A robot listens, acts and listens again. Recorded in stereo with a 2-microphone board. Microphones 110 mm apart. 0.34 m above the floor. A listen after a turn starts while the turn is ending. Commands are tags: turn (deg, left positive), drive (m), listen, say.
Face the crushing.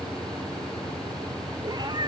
<listen/>
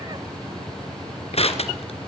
<turn deg="60"/>
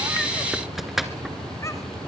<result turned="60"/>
<say>Found it: crushing, straight ahead.</say>